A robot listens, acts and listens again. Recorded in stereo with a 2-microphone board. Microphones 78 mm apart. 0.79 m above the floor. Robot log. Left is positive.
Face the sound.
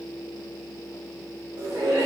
note: The laughter: about 60° right or 120° right.
cmd yaw -60
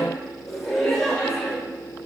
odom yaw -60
note: So it is at 10° left.
cmd yaw +10
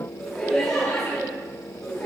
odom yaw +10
end: Found it: laughter, straight ahead.